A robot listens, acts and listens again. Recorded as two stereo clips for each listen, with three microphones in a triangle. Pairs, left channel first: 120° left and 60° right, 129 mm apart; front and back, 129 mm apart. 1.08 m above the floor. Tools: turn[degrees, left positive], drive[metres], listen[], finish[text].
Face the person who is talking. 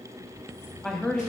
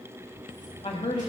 Thought: The woman speaking: 35° left.
Action: turn[35]
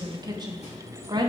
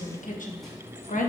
Action: finish[Facing the woman speaking.]